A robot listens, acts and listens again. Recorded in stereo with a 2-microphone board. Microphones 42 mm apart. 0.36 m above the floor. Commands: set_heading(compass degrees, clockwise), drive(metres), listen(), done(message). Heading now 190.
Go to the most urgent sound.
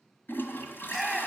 set_heading(160)
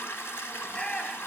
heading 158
set_heading(8)
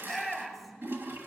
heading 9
drive(1.0)
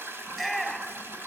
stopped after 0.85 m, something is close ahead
done("I am next to the shout.")